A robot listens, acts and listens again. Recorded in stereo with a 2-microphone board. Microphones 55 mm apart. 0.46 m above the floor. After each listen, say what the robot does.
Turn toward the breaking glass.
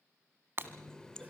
Turn 45° right.
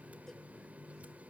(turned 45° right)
Keep listening.
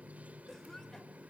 I heard breaking glass, but can't make it out now. It was about straight ahead or 90° right.